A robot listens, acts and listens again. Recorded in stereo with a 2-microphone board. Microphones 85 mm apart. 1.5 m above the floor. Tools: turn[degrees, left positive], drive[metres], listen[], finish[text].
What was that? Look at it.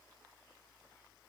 Action: listen[]
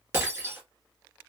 Thought: The breaking glass: about 30° right or 150° right.
Action: turn[-30]
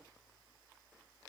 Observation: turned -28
Action: listen[]
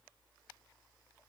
Action: finish[I heard breaking glass, but can't make it out now. It was about straight ahead or 125° right.]